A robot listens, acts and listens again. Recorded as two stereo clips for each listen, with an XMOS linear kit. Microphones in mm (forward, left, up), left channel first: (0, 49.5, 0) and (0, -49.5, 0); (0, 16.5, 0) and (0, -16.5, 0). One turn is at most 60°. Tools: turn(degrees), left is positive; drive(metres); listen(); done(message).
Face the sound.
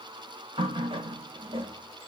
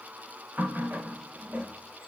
turn(degrees=-60)
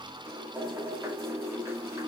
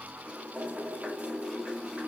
turn(degrees=-30)
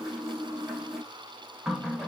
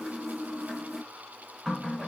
done("Facing the running tap.")